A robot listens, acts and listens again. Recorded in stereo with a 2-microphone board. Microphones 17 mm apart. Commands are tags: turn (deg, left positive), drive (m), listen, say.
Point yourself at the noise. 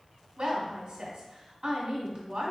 <turn deg="-55"/>
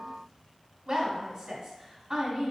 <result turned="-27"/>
<turn deg="-45"/>
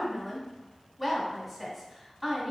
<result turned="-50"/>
<say>Facing the woman speaking, 1 to 2 m away.</say>